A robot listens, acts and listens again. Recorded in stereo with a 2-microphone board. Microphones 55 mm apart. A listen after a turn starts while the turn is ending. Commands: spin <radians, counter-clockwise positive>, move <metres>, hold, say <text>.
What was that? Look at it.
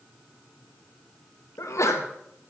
spin 1.22
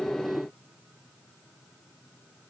hold
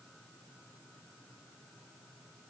say I heard a sneeze, but can't make it out now. It was about straight ahead or 40° left.